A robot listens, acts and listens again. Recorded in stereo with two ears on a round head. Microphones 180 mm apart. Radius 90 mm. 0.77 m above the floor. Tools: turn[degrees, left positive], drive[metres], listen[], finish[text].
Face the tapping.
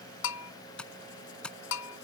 Action: turn[30]
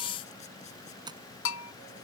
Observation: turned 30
Thought: So it is at 25° right.
Action: turn[-25]
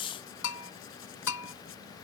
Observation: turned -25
Action: listen[]
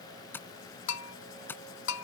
Thought: The tapping is now 10° left.
Action: turn[10]
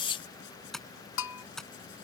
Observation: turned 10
Action: finish[Facing the tapping.]